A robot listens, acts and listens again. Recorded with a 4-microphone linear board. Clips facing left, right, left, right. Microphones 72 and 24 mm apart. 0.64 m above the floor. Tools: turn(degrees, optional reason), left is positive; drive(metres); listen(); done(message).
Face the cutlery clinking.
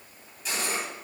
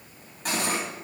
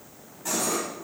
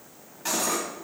turn(degrees=-55, reason="The cutlery clinking: about 55° right or 125° right.")
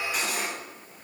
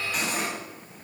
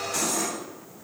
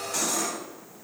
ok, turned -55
done("Found it: cutlery clinking, straight ahead, 2 to 4 m away.")